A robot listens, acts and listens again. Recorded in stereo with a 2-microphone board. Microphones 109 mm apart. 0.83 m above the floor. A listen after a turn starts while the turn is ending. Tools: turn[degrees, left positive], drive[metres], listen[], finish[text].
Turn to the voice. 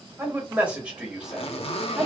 Action: turn[30]
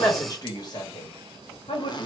Thought: So it is at 125° left.
Action: turn[125]
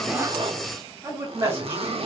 Thought: The man speaking is now 30° right.
Action: turn[-30]
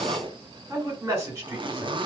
Thought: The man speaking is now 20° right.
Action: turn[-20]
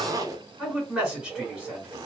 Action: finish[Facing the man speaking.]